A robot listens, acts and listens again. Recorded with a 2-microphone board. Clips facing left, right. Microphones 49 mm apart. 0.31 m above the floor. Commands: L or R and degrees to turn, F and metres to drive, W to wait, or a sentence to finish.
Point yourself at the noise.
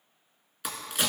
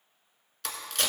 L30
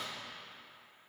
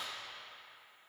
W
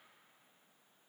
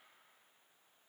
I heard a crack, but can't make it out now. It was about 15° right or 135° left.